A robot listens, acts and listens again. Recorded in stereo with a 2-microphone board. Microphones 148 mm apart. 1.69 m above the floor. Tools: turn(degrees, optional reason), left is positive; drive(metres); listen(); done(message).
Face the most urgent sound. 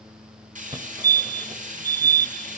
turn(degrees=-30, reason="The fire alarm: about 30° right or 150° right.")
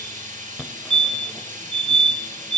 done("Found it: a fire alarm, straight ahead, 1 to 2 m away.")